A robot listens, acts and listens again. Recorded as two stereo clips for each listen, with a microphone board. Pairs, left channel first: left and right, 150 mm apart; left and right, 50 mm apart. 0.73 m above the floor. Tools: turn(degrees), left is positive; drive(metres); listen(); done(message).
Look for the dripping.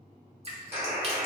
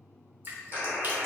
turn(degrees=-40)
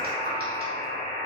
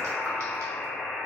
listen()
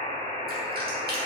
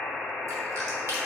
listen()
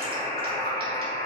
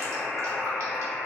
done("I heard dripping, but can't make it out now. It was about straight ahead or 100° right.")